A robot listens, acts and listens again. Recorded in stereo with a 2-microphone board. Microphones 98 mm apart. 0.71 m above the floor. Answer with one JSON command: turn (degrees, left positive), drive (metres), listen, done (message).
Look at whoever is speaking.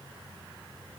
{"listen": true}
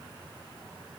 {"listen": true}
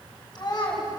{"turn": 40}
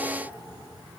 {"listen": true}
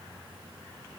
{"listen": true}
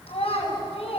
{"turn": 100}
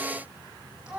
{"done": "Facing the child speaking."}